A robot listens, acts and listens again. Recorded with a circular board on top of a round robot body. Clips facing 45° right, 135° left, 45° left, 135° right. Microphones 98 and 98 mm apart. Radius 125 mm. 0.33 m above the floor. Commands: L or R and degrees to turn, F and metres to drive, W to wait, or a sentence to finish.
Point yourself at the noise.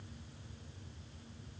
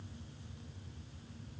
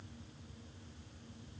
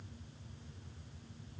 W
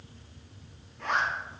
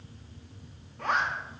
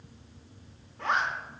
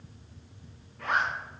L105
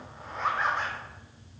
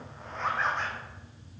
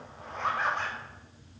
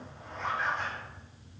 L40
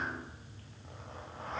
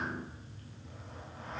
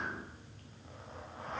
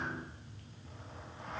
W
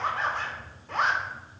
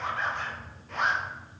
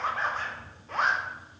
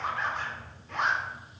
Facing the zipper, under 1 m away.